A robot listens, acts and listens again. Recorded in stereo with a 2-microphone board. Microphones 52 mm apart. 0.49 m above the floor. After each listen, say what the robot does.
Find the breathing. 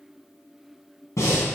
Turn 90° left.
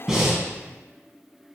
Turn 10° right.
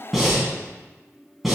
Found it: breathing, straight ahead.